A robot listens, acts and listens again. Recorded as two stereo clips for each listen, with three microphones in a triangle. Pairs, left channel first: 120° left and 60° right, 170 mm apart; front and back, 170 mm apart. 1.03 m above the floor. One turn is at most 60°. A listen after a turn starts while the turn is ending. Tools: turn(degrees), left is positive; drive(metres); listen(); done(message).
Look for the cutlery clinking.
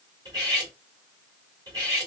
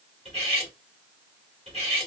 turn(degrees=-60)
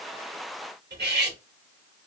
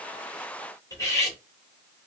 turn(degrees=-60)
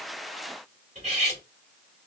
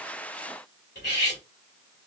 turn(degrees=-10)
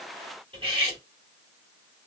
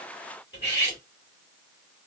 done("Found it: cutlery clinking, straight ahead.")